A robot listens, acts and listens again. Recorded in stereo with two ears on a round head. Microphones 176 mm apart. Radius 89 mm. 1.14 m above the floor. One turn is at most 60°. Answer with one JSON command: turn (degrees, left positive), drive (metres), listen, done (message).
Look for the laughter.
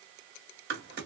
{"listen": true}
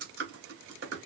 {"listen": true}
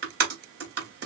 {"done": "I can't make out laughter, only typing on a keyboard."}